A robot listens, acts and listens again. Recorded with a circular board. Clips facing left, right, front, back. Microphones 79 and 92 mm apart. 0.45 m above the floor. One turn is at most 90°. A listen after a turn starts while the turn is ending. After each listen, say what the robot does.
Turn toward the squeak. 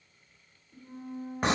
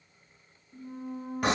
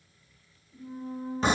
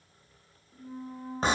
Turn 90° left.
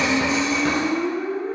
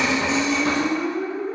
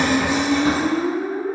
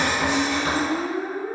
Turn 90° left.
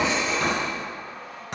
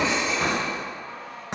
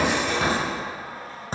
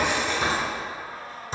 Turn 15° left.
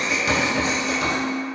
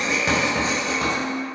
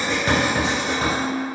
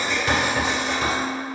Turn 10° right.
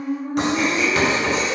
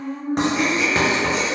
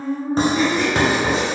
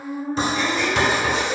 Facing the squeak.